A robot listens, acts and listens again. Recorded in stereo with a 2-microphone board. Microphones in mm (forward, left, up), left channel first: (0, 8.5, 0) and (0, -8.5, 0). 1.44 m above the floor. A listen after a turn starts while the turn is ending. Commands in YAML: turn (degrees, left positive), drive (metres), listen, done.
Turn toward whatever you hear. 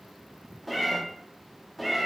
turn: 30
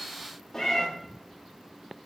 turn: 155
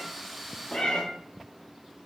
turn: 60
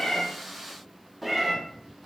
done: "Found it: a cat meowing, straight ahead, 1 to 2 m away."